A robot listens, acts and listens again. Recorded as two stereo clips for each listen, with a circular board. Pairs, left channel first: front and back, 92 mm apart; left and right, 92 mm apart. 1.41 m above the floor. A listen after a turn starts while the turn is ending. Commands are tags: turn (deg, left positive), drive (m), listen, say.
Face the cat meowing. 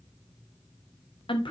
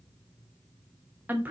<listen/>
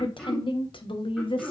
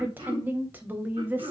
<listen/>
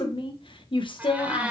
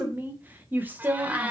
<turn deg="-125"/>
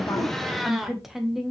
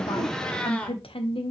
<turn deg="105"/>
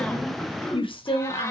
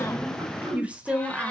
<listen/>
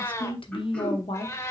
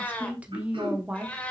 <turn deg="25"/>
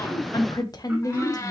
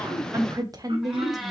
<say>Found it: a cat meowing, straight ahead, 1 to 2 m away.</say>